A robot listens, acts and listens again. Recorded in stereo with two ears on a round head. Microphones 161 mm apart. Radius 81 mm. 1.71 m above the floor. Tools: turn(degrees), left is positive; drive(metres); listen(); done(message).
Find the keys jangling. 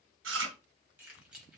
turn(degrees=-30)
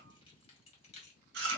turn(degrees=35)
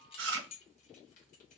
turn(degrees=35)
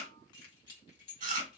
turn(degrees=30)
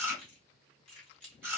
done("Found it: keys jangling, straight ahead, 2 to 4 m away.")